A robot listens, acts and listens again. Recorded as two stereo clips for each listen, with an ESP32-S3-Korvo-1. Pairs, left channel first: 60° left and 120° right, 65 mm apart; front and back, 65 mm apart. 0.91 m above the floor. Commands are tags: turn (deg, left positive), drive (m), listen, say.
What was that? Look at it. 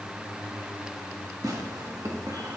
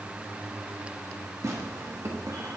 <turn deg="-140"/>
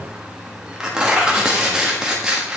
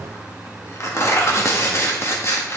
<turn deg="-45"/>
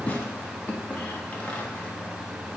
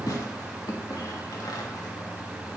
<say>Found it: tearing paper, straight ahead, 1 to 2 m away.</say>